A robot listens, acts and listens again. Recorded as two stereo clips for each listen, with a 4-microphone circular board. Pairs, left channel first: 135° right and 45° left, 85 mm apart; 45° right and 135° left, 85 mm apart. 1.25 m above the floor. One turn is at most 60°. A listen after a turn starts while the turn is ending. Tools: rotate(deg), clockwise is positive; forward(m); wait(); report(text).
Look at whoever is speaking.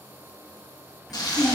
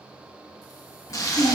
rotate(45)
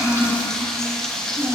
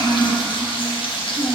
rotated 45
rotate(10)
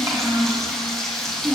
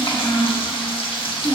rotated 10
report("Facing the child speaking.")